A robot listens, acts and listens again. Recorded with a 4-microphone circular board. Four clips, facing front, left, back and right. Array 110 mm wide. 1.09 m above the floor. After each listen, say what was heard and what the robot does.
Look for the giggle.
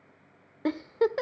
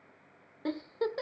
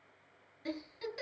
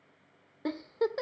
Facing the giggle.